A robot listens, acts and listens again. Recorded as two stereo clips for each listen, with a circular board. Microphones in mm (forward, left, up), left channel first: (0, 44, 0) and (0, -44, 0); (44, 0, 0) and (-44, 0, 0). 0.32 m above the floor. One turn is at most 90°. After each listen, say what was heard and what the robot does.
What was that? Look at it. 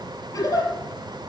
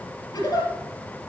The giggle: 45° left. Turn 45° left.
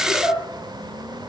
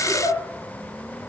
The giggle is now 10° right. Turn 10° right.
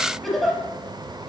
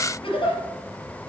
Facing the giggle, over 4 m away.